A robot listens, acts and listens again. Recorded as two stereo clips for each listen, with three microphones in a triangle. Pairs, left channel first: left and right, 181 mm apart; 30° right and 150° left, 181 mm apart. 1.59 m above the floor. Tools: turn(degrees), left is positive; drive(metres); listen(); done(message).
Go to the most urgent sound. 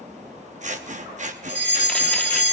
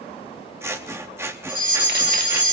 turn(degrees=90)
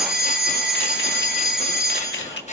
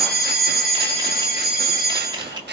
drive(metres=1.0)
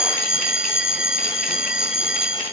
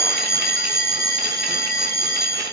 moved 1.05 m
drive(metres=1.0)
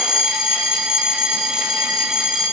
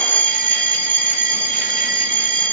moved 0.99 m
drive(metres=1.0)
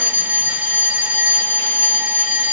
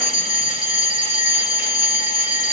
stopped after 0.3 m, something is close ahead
turn(degrees=-10)
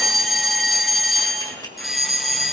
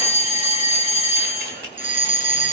done("Arrived at the fire alarm, straight ahead.")